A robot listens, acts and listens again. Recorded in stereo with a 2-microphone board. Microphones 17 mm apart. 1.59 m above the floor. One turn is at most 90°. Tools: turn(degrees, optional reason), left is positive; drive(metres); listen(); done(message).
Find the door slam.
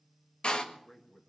turn(degrees=75, reason="The door slam: about 75° left or 105° left.")
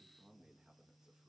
listen()
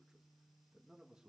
done("I heard a door slam, but can't make it out now. It was about straight ahead or 30° left.")